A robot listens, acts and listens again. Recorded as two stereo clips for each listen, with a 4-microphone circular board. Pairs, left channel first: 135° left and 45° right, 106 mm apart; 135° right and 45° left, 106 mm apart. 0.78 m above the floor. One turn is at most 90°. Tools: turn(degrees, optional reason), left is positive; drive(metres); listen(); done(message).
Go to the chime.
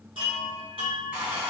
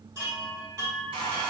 turn(degrees=-10, reason="The chime: 10° right.")
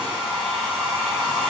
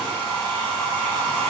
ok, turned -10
listen()
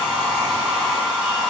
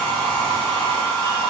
listen()
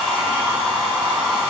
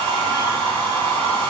done("I heard a chime from this way, but can't make it out now. I did not reach it.")